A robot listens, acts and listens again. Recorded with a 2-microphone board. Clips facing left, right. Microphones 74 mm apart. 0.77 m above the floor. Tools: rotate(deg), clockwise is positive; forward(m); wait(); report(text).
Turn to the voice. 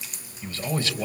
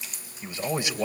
rotate(20)
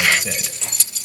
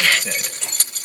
report("Facing the man speaking.")